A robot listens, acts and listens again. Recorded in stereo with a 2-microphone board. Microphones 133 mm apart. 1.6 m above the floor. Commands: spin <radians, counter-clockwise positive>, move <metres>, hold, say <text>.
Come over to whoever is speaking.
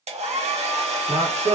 spin -0.87
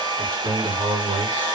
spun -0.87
spin -1.40
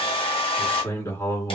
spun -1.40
spin 0.35
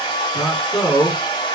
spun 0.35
move 1.0
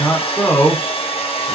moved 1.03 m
spin 0.17
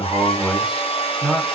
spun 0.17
move 1.0
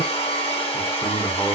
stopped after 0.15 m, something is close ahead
hold
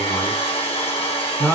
say I am next to the man speaking.